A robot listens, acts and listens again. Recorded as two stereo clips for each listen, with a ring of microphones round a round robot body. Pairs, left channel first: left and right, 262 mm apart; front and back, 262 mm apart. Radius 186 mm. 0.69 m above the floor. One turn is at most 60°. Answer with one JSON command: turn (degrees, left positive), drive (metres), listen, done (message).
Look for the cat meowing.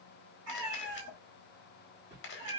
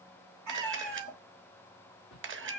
{"turn": -60}
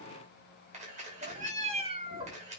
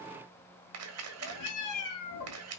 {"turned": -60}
{"turn": -20}
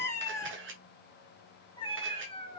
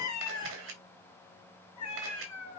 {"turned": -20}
{"turn": 20}
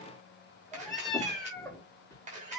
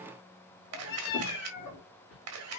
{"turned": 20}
{"done": "Found it: a cat meowing, straight ahead."}